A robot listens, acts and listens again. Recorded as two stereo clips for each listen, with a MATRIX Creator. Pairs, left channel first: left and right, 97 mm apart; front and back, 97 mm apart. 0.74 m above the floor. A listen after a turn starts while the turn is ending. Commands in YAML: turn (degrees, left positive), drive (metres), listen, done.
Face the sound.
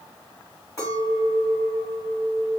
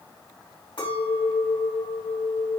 turn: 35
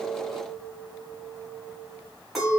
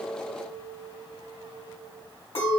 done: "Found it: a clink, straight ahead, 2 to 4 m away."